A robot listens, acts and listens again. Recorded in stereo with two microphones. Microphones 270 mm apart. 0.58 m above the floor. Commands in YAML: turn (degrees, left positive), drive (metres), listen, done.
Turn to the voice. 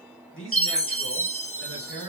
turn: 50
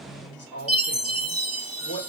turn: 75
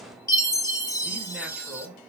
listen: true
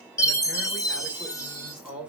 done: "Facing the man speaking, 2 to 4 m away."